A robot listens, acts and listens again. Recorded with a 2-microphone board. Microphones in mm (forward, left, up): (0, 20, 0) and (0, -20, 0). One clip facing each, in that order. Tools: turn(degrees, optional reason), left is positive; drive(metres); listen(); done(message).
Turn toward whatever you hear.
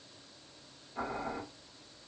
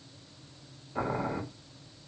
turn(degrees=-50, reason="The boiling: about 50° right or 130° right.")
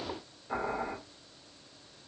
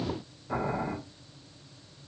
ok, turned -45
done("Found it: boiling, straight ahead, 1 to 2 m away.")